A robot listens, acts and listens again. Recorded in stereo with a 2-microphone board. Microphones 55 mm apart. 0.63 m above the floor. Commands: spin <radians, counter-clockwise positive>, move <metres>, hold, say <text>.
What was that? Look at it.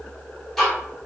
spin 0.52
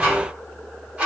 spin -0.44
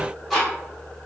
say Found it: ticking, straight ahead.